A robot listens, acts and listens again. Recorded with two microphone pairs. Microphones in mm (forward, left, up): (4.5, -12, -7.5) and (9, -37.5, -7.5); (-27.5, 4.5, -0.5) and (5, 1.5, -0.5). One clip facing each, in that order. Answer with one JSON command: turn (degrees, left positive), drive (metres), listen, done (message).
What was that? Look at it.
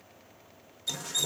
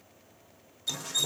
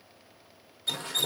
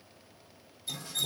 {"turn": -165}
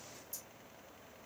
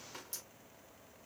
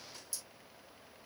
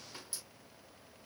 {"turn": -60}
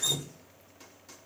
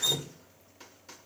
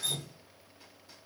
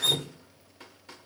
{"turn": -10}
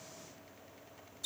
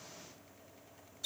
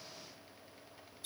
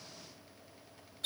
{"done": "Found it: dripping, straight ahead, under 1 m away."}